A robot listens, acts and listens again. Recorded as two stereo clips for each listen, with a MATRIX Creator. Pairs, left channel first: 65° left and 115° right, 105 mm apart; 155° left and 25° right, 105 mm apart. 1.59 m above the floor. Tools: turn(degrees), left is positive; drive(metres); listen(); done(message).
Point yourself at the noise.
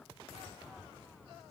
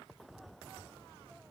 listen()
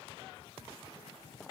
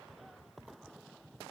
listen()
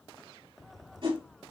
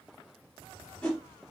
turn(degrees=-125)
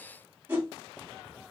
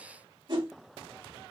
turn(degrees=-45)
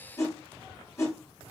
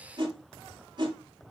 turn(degrees=10)
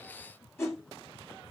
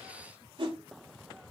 done("Facing the whoosh, 1 to 2 m away.")